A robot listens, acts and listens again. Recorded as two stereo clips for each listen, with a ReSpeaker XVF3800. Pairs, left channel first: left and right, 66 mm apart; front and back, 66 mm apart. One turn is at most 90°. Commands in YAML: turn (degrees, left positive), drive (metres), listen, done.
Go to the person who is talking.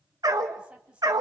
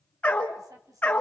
turn: -90
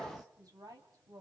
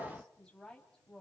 turn: -80
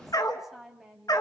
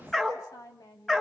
drive: 1.0
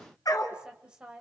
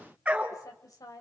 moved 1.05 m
turn: -15
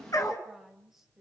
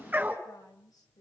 drive: 1.0
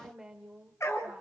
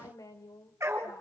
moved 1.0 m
turn: -10
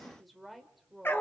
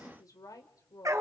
drive: 1.0
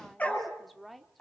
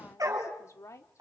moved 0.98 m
drive: 1.0
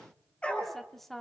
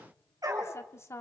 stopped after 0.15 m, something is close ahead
done: "Arrived at the woman speaking, straight ahead."